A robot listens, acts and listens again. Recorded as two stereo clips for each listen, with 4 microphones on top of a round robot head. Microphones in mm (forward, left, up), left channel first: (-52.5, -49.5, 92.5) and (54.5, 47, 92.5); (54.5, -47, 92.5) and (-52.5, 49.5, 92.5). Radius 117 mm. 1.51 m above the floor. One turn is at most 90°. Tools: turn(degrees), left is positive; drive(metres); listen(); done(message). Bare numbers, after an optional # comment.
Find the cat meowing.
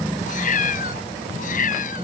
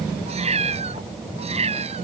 # The cat meowing: 175° right.
turn(-90)
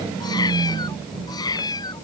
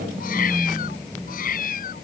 # The cat meowing is now 75° right.
turn(-75)
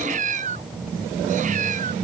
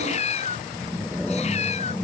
done("Found it: a cat meowing, straight ahead.")